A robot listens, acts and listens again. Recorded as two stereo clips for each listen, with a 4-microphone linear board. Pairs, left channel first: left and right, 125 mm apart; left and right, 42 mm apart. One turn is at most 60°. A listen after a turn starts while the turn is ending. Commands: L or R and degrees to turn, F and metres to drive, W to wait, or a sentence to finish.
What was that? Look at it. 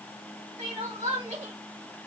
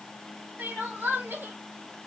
R60
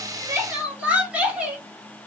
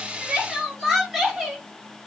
R10
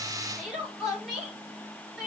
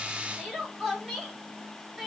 Facing the crying, 1 to 2 m away.